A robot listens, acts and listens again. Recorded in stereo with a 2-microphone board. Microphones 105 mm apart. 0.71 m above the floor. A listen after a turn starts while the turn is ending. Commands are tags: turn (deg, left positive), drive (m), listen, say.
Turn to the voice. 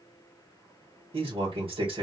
<turn deg="-60"/>
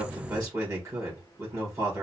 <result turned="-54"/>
<turn deg="-35"/>
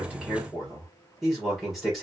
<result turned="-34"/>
<say>Facing the man speaking, 1 to 2 m away.</say>